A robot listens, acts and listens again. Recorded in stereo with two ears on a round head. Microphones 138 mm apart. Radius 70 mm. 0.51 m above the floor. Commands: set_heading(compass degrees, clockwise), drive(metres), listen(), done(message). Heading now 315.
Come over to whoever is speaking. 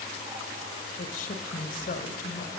set_heading(255)
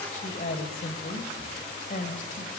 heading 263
set_heading(203)
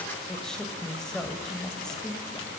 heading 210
drive(1.0)
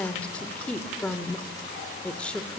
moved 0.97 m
set_heading(200)
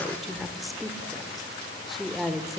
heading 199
drive(1.0)
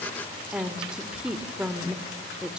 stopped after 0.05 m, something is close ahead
done("Arrived at the woman speaking, straight ahead.")